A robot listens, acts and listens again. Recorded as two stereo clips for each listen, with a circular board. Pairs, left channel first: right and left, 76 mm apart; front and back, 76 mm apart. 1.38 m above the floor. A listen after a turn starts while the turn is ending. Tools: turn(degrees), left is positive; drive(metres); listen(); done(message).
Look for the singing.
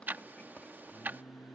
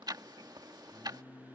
turn(degrees=-50)
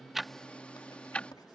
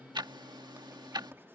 listen()
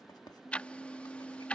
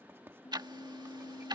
turn(degrees=-10)
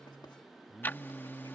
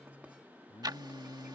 done("Found it: singing, straight ahead.")